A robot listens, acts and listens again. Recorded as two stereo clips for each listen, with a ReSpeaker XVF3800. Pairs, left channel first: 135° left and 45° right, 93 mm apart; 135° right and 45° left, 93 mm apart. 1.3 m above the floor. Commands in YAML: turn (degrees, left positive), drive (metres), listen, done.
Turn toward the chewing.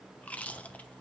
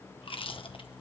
turn: -150
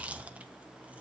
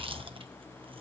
listen: true
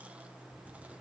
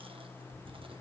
turn: 30
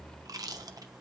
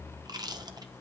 done: "Found it: chewing, straight ahead, 1 to 2 m away."